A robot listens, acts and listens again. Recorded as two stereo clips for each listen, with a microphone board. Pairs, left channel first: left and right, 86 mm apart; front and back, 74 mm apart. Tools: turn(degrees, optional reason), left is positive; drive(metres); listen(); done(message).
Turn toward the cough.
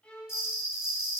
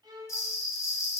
listen()
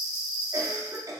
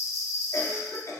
turn(degrees=-45, reason="The cough: 45° right.")
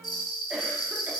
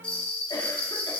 listen()
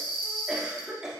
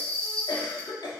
turn(degrees=-10, reason="The cough is now 10° right.")
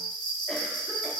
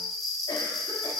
listen()
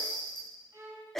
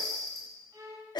done("Found it: a cough, straight ahead.")